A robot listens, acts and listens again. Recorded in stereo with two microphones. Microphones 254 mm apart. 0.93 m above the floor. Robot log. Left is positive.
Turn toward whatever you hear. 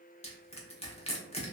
note: The crushing: about 25° left or 155° left.
cmd yaw +25
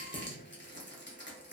note: So it is at 125° left.
cmd yaw +125
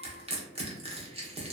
note: The crushing is now 30° right.
cmd yaw -30
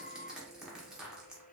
end: Facing the crushing.